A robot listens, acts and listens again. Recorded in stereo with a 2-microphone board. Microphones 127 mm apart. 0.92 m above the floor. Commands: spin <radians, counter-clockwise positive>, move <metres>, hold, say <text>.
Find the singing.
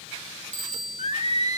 spin 0.96
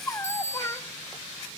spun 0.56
spin 0.44
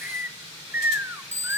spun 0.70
spin -0.26
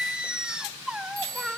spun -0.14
say Found it: singing, straight ahead, under 1 m away.